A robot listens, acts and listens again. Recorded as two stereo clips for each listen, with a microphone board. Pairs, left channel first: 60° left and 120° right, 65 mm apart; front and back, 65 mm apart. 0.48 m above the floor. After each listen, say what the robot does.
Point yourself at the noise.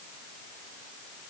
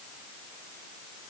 Keep listening.
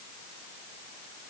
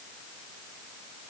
Keep listening.
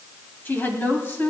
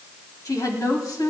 Turn 10° left.
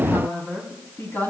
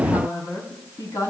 Facing the woman speaking, over 4 m away.